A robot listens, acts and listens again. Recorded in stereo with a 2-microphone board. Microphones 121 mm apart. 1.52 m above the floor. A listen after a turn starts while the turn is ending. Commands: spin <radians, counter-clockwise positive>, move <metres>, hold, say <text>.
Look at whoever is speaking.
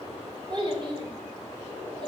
spin -0.70
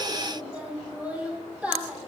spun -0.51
spin -0.17
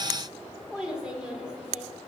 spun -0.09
say Found it: a child speaking, straight ahead.